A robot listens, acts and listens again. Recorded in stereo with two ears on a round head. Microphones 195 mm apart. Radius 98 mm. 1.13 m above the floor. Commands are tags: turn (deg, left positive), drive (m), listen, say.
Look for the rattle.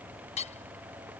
<listen/>
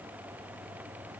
<listen/>
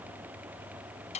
<say>I can't make out a rattle, only hammering.</say>